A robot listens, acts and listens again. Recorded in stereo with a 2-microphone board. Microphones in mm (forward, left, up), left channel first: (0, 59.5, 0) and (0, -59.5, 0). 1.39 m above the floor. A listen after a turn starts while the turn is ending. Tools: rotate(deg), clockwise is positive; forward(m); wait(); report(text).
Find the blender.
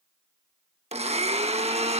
rotate(60)
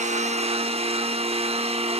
rotate(60)
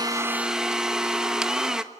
report("Found it: a blender, straight ahead.")